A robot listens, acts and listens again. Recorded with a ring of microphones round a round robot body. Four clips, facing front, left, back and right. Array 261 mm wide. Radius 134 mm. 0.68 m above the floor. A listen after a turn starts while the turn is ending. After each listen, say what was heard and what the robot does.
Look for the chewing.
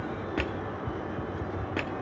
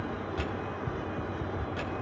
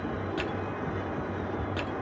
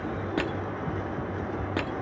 Keep listening.
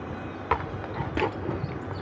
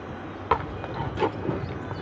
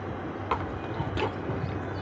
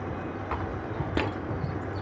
The chewing: 70° left. Turn 70° left.
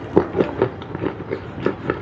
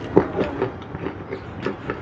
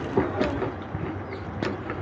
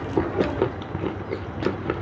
The chewing is now 10° right. Turn 10° right.
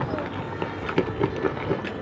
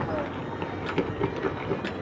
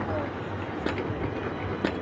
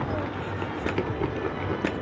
Facing the chewing.